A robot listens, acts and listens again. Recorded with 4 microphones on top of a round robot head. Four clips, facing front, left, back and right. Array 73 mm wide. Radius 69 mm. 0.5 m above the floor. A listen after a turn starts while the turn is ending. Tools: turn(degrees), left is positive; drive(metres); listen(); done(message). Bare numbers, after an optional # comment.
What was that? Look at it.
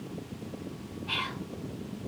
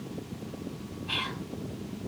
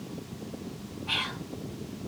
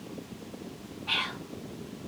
# The whispering: 105° right.
turn(-105)
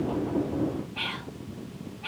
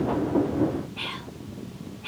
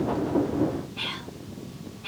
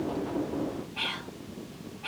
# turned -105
# The whispering is now 25° right.
turn(-25)
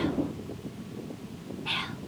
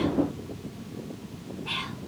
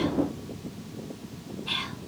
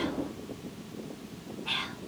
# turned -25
done("Facing the whispering, 1 to 2 m away.")